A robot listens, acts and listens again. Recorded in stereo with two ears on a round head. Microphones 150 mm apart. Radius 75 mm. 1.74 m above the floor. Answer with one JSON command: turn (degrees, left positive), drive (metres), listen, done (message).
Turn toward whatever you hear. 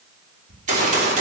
{"turn": -50}
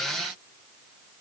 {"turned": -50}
{"listen": true}
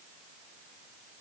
{"done": "I heard a gunshot, but can't make it out now. It was about straight ahead or 80° right."}